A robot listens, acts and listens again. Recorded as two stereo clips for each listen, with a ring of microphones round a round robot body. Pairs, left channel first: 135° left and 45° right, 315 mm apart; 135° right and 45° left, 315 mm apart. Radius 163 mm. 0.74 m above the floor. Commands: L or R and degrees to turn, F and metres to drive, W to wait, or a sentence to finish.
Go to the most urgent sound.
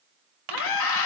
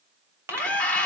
L140
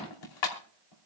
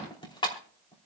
W
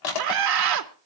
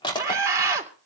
R35
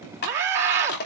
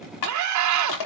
L10
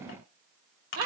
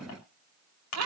F1.0
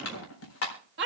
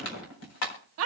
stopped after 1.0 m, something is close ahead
Arrived at the scream, straight ahead.